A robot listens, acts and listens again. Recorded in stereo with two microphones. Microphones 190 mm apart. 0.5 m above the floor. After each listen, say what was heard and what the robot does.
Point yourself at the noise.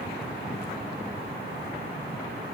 Keep listening.
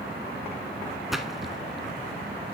Turn 30° left.
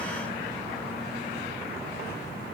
Keep listening.
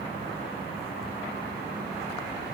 I heard a splash, but can't make it out now. It was about 30° right or 150° left.